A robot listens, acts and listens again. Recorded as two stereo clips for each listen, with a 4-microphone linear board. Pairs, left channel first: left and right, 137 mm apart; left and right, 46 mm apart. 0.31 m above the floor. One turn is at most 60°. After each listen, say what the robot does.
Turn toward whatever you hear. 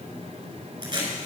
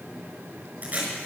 Turn 35° right.
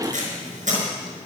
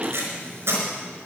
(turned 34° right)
Turn 60° right.
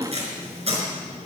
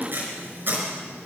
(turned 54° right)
Turn 55° right.
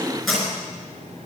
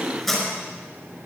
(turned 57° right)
Found it: tape being pulled, straight ahead, over 4 m away.